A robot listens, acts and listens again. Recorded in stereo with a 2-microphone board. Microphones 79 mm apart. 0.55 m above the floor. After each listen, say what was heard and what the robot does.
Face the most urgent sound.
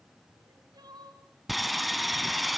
The crying: about 60° right or 120° right. Turn 60° right.
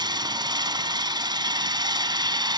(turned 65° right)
Keep listening.
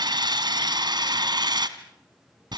Keep listening.
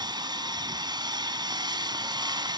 I heard crying, but can't make it out now. It was about 5° left or 55° right.